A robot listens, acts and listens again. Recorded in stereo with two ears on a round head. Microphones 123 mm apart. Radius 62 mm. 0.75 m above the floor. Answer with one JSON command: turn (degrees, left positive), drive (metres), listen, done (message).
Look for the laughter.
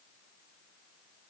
{"listen": true}
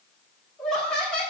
{"turn": 30}
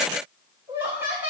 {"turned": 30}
{"turn": -15}
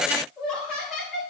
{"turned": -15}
{"done": "Facing the laughter."}